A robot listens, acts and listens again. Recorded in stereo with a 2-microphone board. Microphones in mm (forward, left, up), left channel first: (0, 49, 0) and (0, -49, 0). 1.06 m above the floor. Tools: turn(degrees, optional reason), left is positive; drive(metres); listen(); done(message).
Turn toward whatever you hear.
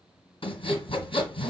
turn(degrees=65, reason="The sawing: about 65° left or 115° left.")
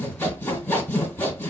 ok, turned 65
turn(degrees=20, reason="So it is at 20° left.")
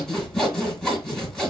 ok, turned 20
done("Found it: sawing, straight ahead, 1 to 2 m away.")